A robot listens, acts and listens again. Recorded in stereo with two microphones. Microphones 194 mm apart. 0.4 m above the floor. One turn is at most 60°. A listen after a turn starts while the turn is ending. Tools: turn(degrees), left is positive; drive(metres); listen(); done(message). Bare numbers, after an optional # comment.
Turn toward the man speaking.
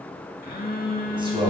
# The man speaking: about 30° right or 150° right.
turn(-30)
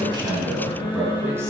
# So it is at 15° right.
turn(-15)
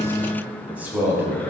# The man speaking is now 15° right.
turn(-15)
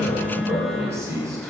# The man speaking is now 15° right.
turn(-15)
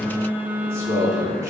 # The man speaking is now 15° right.
turn(-15)
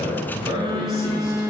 done("Facing the man speaking.")